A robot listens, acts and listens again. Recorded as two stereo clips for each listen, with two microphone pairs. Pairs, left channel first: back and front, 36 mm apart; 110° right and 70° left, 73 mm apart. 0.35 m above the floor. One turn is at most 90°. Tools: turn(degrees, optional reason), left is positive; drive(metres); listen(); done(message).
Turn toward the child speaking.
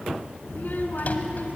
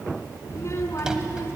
turn(degrees=-90, reason="The child speaking: 160° right.")
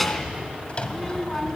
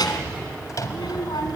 turn(degrees=-90, reason="The child speaking is now 110° right.")
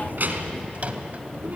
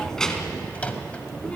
turn(degrees=-35, reason="The child speaking is now 35° right.")
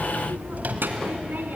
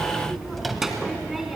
turn(degrees=-15, reason="The child speaking is now 15° right.")
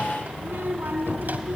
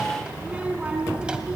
done("Facing the child speaking, 2 to 4 m away.")